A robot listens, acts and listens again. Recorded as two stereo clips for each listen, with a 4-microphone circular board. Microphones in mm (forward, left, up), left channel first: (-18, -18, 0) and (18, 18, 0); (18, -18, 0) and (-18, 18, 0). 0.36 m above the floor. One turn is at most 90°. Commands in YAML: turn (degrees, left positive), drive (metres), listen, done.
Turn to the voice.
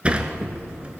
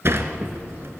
listen: true
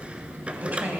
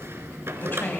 turn: -10
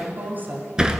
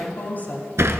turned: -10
done: "Facing the woman speaking."